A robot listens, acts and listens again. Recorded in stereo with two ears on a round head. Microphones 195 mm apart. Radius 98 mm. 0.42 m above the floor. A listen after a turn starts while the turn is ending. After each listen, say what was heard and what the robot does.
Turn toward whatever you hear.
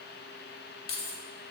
The keys jangling: about 45° left or 135° left. Turn 45° left.
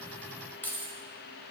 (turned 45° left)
So it is at 10° left. Turn 10° left.
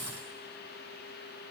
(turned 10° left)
Keep listening.
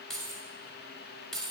Found it: keys jangling, straight ahead.